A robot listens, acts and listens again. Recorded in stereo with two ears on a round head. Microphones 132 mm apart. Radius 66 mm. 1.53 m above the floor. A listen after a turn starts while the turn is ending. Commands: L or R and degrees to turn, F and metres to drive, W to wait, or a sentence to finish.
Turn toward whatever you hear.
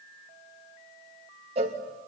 R40
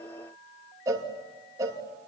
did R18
R20
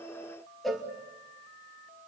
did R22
Found it: a cowbell, straight ahead, 2 to 4 m away.